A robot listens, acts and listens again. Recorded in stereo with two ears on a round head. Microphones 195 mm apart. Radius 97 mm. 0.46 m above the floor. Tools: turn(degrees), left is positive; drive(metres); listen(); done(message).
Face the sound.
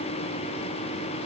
listen()
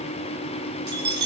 turn(degrees=-50)
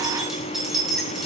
done("Facing the keys jangling, over 4 m away.")